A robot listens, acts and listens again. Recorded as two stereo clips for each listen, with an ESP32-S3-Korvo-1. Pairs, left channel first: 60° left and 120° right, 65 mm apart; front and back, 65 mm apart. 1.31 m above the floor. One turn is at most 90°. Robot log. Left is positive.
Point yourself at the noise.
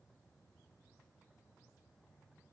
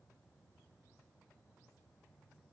cmd idle
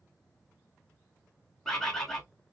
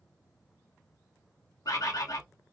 note: The bird: 20° right.
cmd yaw -20
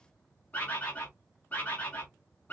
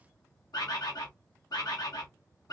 end: Found it: a bird, straight ahead.